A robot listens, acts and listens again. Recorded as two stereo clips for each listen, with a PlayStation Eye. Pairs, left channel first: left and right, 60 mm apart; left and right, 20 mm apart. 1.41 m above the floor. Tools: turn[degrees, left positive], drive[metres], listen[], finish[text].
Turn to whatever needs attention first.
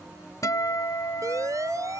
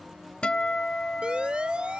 Thought: The siren: about 70° right or 110° right.
Action: turn[-70]
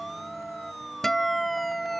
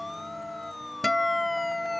Action: finish[Found it: a siren, straight ahead.]